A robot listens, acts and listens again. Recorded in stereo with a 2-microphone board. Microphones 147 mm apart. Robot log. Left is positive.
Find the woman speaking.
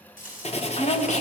note: The woman speaking: about 60° left or 120° left.
cmd yaw +60
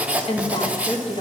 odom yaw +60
note: So it is at 40° left.
cmd yaw +40
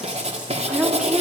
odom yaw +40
end: Facing the woman speaking.